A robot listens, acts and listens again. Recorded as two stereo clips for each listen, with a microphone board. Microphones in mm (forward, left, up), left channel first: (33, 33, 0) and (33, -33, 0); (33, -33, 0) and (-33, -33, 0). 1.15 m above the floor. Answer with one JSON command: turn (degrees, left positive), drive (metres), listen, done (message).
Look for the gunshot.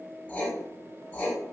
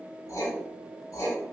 {"listen": true}
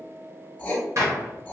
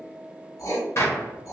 {"turn": -50}
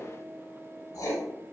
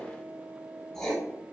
{"done": "I heard a gunshot from this way, but can't make it out now."}